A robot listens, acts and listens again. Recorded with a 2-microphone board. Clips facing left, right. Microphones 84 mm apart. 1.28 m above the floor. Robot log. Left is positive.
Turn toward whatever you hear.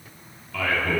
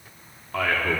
note: The man speaking: about 45° right or 135° right.
cmd yaw -45
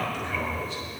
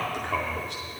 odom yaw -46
note: So it is at 80° right.
cmd yaw -80
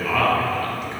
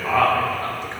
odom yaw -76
note: The man speaking is now 35° right.
cmd yaw -35
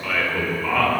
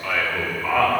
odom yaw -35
note: The man speaking is now 10° right.
cmd yaw -10
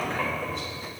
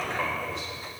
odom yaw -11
end: Found it: a man speaking, straight ahead, 2 to 4 m away.